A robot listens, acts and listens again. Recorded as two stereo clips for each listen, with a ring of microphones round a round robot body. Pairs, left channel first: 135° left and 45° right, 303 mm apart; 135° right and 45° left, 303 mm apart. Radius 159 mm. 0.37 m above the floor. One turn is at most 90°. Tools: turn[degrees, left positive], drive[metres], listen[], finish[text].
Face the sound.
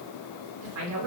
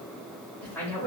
Thought: The woman speaking: 55° right.
Action: turn[-55]
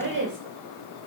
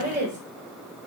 Thought: The woman speaking is now 10° right.
Action: turn[-10]
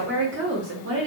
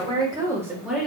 Thought: The woman speaking is now 45° right.
Action: turn[-45]
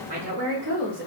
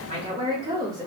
Thought: The woman speaking is now 30° right.
Action: turn[-30]
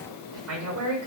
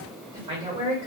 Thought: The woman speaking is now 35° right.
Action: turn[-35]
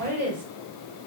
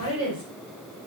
Action: finish[Facing the woman speaking.]